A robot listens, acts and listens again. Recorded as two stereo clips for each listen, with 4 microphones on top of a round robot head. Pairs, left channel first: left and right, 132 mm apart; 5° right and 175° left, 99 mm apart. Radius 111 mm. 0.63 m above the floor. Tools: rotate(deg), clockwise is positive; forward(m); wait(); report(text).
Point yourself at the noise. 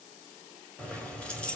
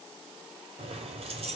rotate(-170)
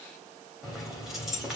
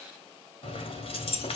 report("Facing the keys jangling.")